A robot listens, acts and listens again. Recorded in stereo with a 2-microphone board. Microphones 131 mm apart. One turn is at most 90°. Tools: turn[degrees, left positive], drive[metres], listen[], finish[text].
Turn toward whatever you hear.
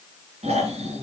Thought: The snoring: about 55° right or 125° right.
Action: turn[-55]
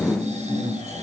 Thought: So it is at 65° right.
Action: turn[-65]
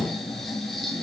Action: finish[Facing the snoring.]